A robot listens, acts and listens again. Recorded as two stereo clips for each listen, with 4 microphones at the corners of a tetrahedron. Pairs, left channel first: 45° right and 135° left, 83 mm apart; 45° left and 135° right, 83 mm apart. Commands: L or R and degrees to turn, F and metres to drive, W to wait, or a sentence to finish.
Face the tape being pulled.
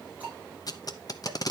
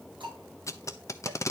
Found it: tape being pulled, straight ahead, under 1 m away.